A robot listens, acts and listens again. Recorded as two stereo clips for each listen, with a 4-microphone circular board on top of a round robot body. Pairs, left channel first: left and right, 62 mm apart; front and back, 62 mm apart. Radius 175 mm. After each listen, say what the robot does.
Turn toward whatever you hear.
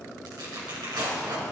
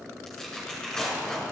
Turn 80° right.
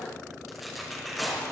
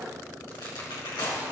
Found it: tearing paper, straight ahead.